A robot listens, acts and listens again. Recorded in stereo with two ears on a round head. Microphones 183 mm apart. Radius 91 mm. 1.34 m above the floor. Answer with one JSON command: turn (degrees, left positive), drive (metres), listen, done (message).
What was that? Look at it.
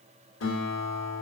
{"turn": 70}
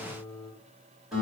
{"done": "Facing the guitar."}